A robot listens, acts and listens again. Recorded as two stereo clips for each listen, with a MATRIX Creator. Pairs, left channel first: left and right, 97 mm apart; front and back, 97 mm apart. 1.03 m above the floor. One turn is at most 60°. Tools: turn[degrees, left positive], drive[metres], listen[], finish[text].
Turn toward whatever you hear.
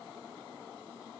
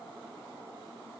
Action: listen[]
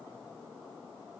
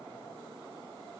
Action: listen[]
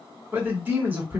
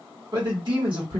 Thought: The man speaking: 155° right.
Action: turn[-60]
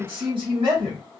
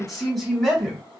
Thought: The man speaking is now 90° right.
Action: turn[-60]
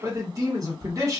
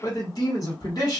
Thought: The man speaking is now 40° right.
Action: turn[-40]
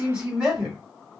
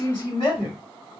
Thought: The man speaking is now 10° right.
Action: turn[-10]
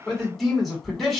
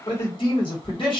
Action: finish[Found it: a man speaking, straight ahead.]